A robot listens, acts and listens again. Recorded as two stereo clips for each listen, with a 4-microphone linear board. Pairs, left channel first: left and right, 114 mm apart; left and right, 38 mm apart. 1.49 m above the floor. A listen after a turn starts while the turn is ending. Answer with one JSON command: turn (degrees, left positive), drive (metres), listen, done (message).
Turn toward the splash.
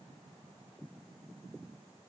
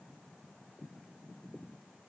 {"listen": true}
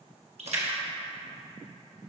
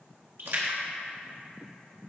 {"turn": -70}
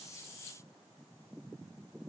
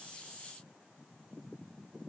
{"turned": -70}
{"listen": true}
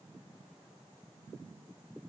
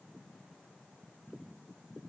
{"done": "I heard a splash, but can't make it out now. It was about straight ahead or 40° right."}